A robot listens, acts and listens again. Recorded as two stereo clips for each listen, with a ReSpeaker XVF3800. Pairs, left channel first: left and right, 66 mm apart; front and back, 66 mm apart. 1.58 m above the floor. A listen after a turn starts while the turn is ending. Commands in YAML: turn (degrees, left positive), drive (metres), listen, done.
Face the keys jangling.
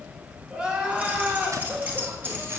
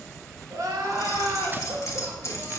turn: -40
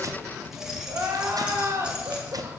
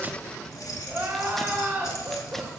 turn: -10
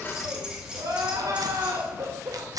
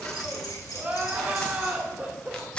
turn: -15
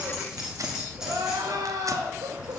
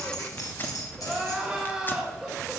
turn: -10
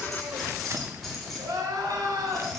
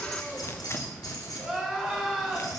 done: "Facing the keys jangling."